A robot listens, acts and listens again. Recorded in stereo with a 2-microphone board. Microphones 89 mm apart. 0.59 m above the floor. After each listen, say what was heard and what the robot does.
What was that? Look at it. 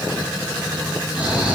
The snoring: about 15° right or 165° right. Turn 15° right.
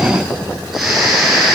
Facing the snoring, over 4 m away.